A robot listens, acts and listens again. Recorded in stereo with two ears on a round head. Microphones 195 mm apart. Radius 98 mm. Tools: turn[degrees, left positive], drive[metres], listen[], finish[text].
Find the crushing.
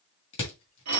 Thought: The crushing: about 25° left or 155° left.
Action: turn[25]
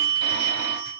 Action: listen[]
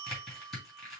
Action: finish[Facing the crushing.]